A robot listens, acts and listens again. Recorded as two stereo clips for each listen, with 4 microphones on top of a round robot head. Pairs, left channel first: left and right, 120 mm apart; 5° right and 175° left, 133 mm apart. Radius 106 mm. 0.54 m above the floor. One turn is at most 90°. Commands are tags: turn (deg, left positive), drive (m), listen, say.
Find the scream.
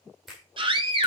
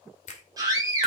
<turn deg="-90"/>
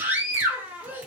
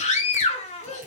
<turn deg="-15"/>
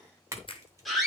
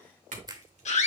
<say>Found it: a scream, straight ahead.</say>